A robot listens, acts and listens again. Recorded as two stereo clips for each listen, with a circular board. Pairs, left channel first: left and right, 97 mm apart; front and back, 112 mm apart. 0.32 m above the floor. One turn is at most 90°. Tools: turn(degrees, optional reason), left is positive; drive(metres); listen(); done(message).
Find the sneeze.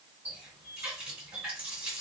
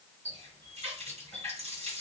listen()
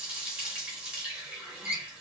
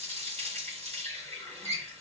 listen()
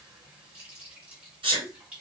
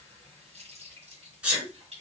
turn(degrees=-90, reason="The sneeze: 100° right.")
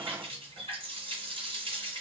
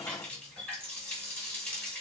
turn(degrees=-10, reason="Nothing new. It was at 10° right.")
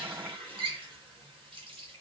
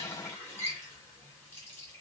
done("Facing where the sneeze came from. I can't hear it now.")